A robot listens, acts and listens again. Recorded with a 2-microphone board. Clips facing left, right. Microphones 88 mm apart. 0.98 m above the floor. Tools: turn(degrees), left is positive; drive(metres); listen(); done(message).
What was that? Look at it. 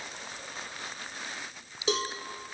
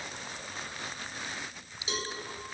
turn(degrees=90)
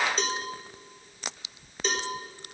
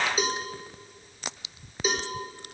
turn(degrees=-10)
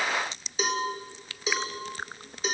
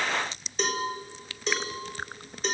done("Found it: a cowbell, straight ahead.")